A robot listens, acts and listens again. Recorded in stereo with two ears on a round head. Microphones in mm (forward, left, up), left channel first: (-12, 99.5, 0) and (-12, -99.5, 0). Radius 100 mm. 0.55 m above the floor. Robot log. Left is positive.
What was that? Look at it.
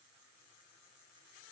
cmd idle
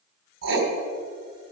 note: The writing: about 55° right or 125° right.
cmd yaw -55
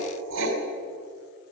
note: So it is at 70° right.
cmd yaw -70
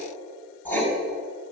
note: The writing is now 10° left.
cmd yaw +10
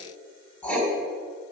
end: Facing the writing.